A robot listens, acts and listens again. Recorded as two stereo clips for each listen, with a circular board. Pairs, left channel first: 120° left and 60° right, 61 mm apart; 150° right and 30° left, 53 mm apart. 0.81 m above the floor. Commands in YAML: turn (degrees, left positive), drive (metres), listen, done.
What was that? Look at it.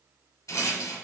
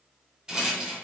turn: 105
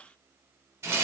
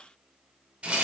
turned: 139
turn: -35
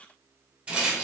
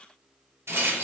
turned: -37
done: "Found it: a rattle, straight ahead."